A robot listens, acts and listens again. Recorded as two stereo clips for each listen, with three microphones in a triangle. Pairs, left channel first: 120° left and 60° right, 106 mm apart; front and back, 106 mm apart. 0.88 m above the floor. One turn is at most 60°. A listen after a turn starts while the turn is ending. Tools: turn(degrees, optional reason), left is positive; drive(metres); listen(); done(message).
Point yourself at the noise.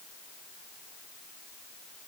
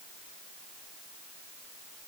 listen()
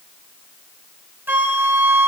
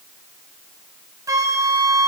turn(degrees=-60, reason="The flute: 130° right.")
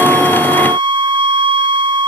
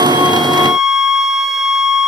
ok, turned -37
turn(degrees=-60, reason="The flute is now 95° right.")
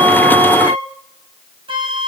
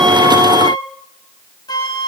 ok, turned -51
turn(degrees=-40, reason="The flute is now 40° right.")
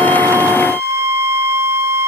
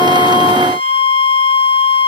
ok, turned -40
done("Facing the flute, under 1 m away.")